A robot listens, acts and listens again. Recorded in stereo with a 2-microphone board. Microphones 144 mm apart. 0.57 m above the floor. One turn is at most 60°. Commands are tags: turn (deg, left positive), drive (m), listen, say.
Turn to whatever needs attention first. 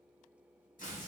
<listen/>
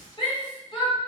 <turn deg="35"/>
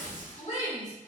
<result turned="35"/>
<turn deg="60"/>
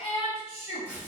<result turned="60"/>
<turn deg="55"/>
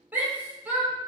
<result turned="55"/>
<turn deg="-15"/>
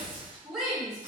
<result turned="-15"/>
<say>Found it: a shout, straight ahead, 1 to 2 m away.</say>